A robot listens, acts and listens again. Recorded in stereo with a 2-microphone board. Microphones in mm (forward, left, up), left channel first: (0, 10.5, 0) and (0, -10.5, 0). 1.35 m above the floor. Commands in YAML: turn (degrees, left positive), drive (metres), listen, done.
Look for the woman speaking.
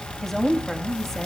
turn: 20
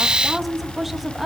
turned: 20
turn: -10
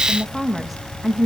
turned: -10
turn: -10
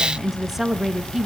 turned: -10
turn: -20
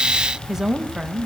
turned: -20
turn: -35
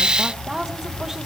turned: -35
turn: -20
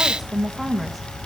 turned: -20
done: "Found it: a woman speaking, straight ahead, 1 to 2 m away."